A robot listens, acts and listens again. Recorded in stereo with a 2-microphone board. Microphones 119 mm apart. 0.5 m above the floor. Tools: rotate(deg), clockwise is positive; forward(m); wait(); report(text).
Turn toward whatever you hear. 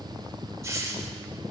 rotate(25)
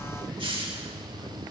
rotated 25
rotate(125)
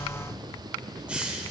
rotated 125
rotate(10)
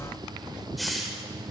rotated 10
report("Facing the hiss, 1 to 2 m away.")